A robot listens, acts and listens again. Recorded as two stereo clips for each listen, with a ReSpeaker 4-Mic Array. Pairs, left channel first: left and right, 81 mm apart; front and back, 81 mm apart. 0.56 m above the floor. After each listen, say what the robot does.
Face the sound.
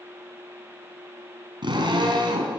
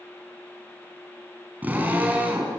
Turn 110° right.
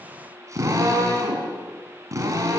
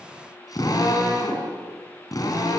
Turn 40° right.
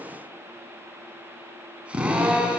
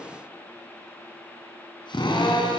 Turn 15° right.
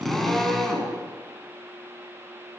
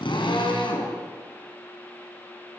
Facing the drill, over 4 m away.